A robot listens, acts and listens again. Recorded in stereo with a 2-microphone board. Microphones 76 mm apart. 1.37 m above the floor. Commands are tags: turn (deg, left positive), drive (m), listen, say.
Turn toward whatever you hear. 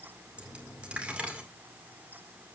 <turn deg="-15"/>
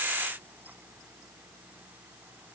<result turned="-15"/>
<listen/>
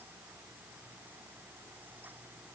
<say>I heard a dropped coin, but can't make it out now. It was about straight ahead or 150° right.</say>